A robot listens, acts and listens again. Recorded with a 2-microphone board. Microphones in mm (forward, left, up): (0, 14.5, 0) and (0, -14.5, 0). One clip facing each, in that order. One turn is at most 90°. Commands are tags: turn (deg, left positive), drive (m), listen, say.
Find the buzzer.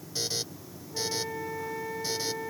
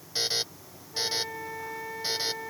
<turn deg="-30"/>
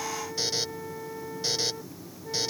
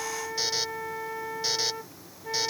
<say>Found it: a buzzer, straight ahead.</say>